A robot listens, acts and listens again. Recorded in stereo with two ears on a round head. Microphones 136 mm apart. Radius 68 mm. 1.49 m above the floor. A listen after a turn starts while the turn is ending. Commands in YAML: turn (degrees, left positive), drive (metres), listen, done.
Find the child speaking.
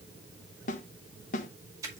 listen: true
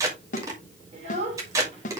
turn: -40
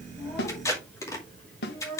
turn: 10
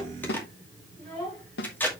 done: "Found it: a child speaking, straight ahead, over 4 m away."